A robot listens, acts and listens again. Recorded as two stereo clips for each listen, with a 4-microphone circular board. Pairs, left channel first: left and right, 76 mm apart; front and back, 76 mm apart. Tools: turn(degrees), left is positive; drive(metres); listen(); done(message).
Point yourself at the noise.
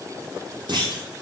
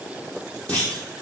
turn(degrees=-70)
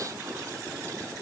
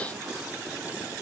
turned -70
done("I heard a clunk from this way, but can't make it out now.")